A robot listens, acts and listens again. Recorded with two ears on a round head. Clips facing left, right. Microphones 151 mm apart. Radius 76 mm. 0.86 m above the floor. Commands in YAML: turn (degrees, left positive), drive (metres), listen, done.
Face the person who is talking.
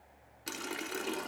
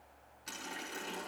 listen: true
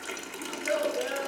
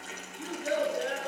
turn: -30
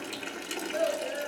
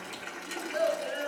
turn: -135
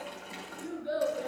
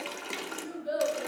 done: "Facing the child speaking, over 4 m away."